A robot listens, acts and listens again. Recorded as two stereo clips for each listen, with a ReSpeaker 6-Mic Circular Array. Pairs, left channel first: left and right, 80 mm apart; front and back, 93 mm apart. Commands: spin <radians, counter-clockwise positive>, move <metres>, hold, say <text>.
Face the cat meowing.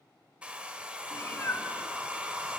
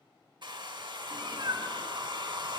spin 2.53
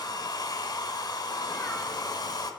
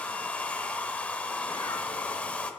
hold
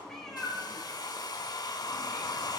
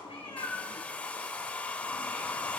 say Found it: a cat meowing, straight ahead, 2 to 4 m away.